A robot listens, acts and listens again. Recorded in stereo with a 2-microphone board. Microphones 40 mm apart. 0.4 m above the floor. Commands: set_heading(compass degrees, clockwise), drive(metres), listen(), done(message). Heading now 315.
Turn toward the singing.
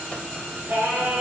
set_heading(5)
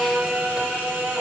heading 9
set_heading(74)
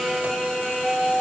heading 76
set_heading(66)
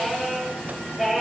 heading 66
done("Facing the singing, over 4 m away.")